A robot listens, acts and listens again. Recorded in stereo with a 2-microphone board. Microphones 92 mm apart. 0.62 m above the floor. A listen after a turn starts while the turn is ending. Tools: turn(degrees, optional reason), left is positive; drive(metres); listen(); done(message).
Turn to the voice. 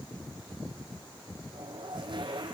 listen()
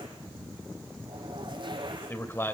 turn(degrees=25, reason="The man speaking: about 25° left or 155° left.")
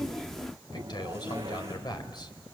turn(degrees=125, reason="So it is at 125° left.")
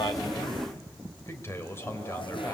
turn(degrees=30, reason="The man speaking is now 30° left.")
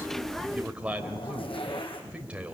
turn(degrees=-15, reason="The man speaking is now 15° right.")
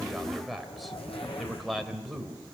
done("Facing the man speaking.")